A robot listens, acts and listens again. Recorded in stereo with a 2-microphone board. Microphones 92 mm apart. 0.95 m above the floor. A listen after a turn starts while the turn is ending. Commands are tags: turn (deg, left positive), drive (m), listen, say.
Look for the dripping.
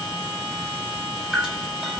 <turn deg="30"/>
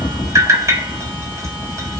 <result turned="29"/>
<turn deg="-30"/>
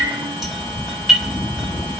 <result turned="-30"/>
<say>Facing the dripping.</say>